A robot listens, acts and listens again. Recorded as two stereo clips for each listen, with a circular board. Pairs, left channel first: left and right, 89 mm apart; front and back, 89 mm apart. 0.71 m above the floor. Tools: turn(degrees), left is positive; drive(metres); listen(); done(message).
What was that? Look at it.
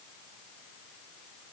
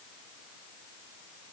listen()
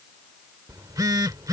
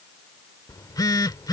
turn(degrees=-45)
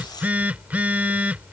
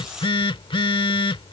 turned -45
turn(degrees=-15)
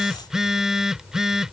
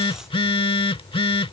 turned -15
done("Found it: a phone buzzing, straight ahead.")